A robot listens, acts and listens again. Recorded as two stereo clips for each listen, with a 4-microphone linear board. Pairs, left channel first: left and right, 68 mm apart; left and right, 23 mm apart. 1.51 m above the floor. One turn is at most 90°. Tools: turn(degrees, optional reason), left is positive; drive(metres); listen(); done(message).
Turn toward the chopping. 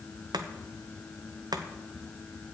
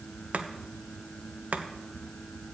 turn(degrees=-90)
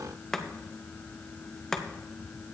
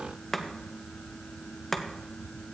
turn(degrees=10, reason="So it is at 10° left.")
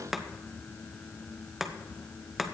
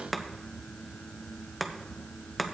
done("Facing the chopping, under 1 m away.")